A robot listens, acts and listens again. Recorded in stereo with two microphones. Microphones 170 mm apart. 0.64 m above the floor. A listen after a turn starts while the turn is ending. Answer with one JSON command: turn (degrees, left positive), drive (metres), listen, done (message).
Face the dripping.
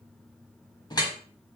{"turn": 25}
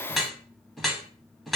{"done": "Facing the dripping."}